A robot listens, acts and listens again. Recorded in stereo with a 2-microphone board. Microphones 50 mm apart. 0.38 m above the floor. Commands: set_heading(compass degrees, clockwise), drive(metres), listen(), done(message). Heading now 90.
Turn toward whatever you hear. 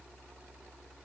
listen()
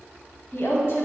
set_heading(30)
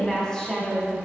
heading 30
set_heading(15)
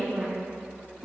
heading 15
done("Found it: a woman speaking, straight ahead.")